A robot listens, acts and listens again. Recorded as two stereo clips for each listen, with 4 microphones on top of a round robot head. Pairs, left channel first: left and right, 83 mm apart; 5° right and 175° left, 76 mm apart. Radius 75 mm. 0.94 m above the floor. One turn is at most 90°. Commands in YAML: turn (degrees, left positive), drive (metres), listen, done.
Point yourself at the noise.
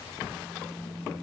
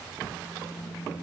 turn: -25
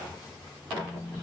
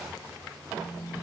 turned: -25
done: "Facing the phone buzzing."